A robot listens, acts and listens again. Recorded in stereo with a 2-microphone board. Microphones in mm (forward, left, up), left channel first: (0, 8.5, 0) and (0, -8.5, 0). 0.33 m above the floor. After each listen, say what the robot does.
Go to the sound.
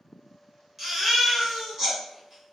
Turn 15° right.
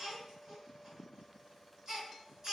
Turn 145° right.
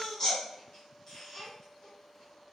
Turn 30° left.
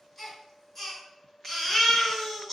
Turn 10° left.
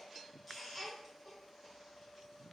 Drive 1.0 m forward.
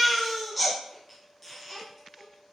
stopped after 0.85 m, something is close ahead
Arrived at the baby crying, straight ahead.